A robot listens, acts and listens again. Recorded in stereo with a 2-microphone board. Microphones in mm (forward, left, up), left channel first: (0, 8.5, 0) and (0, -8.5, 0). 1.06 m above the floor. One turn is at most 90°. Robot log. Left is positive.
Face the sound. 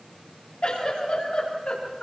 cmd yaw +90
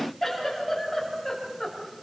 end: Found it: a giggle, straight ahead, over 4 m away.